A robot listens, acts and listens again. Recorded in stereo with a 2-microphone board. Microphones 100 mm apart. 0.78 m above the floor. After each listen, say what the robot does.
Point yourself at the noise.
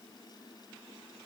Keep listening.
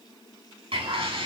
Turn 65° right.
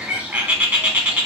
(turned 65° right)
Turn 20° right.
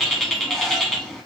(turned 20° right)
Found it: a bird, straight ahead.